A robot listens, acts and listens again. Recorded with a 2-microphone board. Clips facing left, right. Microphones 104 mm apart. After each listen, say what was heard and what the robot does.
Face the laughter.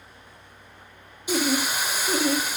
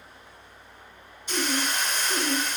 The laughter: about 70° left or 110° left. Turn 70° left.
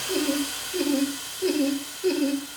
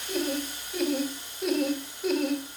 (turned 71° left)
Facing the laughter.